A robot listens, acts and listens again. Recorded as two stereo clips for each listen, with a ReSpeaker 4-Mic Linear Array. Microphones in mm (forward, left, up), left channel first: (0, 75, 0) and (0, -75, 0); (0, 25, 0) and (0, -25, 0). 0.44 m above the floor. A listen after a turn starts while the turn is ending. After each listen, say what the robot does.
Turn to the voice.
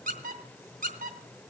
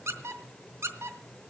Keep listening.
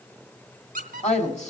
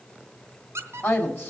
Turn 50° left.
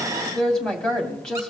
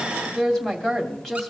Facing the woman speaking.